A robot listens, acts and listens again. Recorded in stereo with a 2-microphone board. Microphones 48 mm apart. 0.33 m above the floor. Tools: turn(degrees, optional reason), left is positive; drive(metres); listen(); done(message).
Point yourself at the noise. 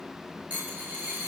turn(degrees=-40, reason="The dropped coin: about 40° right or 140° right.")
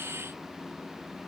listen()
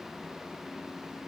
done("I heard a dropped coin, but can't make it out now. It was about straight ahead or 100° right.")